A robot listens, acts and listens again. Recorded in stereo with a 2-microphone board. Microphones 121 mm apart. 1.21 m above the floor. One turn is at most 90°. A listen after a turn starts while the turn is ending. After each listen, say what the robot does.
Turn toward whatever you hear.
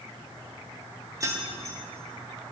Turn 30° right.
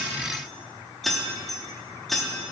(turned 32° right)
Facing the keys jangling.